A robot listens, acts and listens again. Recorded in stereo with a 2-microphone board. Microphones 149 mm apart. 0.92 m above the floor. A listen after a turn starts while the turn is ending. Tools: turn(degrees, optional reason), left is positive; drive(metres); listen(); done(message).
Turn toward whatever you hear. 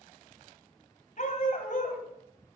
turn(degrees=65, reason="The dog barking: about 65° left or 115° left.")
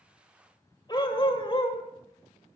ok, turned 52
turn(degrees=40, reason="So it is at 40° left.")
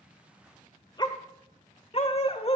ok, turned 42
turn(degrees=40, reason="The dog barking is now 40° left.")
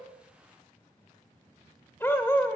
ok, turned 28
turn(degrees=15, reason="The dog barking is now 15° left.")
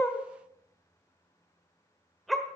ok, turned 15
done("Found it: a dog barking, straight ahead, 1 to 2 m away.")